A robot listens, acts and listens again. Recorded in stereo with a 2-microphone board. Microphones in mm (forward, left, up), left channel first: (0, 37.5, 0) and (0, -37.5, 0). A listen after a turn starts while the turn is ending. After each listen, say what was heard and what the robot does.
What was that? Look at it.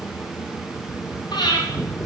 The breathing: about 70° left or 110° left. Turn 70° left.
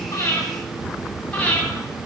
So it is at 15° left. Turn 15° left.
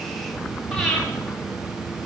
Facing the breathing, 2 to 4 m away.